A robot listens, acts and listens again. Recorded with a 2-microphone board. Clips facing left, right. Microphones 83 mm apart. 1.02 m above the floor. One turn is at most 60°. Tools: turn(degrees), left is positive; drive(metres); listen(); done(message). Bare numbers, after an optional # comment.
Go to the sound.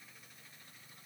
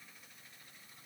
listen()
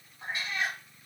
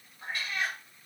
# The cat meowing: about 20° left or 160° left.
turn(20)
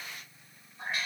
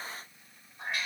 drive(1.0)
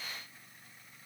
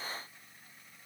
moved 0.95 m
listen()
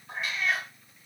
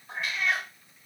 drive(1.0)
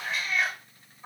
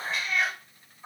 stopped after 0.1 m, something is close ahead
done("I am next to the cat meowing.")